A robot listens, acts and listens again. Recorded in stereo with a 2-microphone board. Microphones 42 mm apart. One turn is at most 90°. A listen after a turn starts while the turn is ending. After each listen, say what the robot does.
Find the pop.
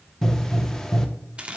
Turn 30° left.
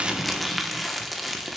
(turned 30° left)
Keep listening.
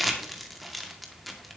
I heard a pop, but can't make it out now. It was about 20° right or 140° left.